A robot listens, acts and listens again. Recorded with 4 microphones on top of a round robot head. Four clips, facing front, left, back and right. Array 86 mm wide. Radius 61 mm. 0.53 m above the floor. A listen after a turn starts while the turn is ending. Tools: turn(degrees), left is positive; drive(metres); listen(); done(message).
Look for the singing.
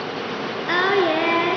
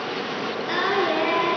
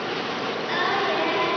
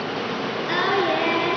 turn(degrees=20)
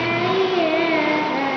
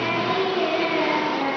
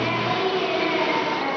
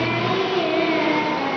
turn(degrees=15)
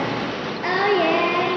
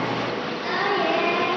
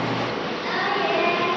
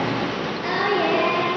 turn(degrees=10)
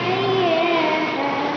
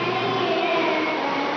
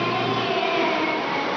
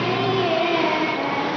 done("Found it: singing, straight ahead.")